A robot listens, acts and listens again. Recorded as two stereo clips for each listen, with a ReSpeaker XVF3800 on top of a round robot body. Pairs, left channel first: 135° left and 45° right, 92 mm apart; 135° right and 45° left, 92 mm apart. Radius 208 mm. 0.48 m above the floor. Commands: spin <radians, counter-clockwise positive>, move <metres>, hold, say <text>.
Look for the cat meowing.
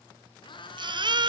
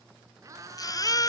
spin 1.75
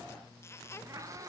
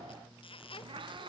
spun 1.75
spin 0.17
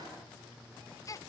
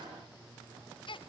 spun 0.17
hold
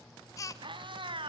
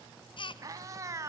spin -0.26
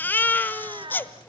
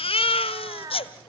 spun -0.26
spin -0.17
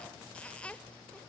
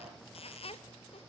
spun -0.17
hold
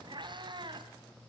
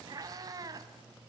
say Found it: a cat meowing, straight ahead, 1 to 2 m away.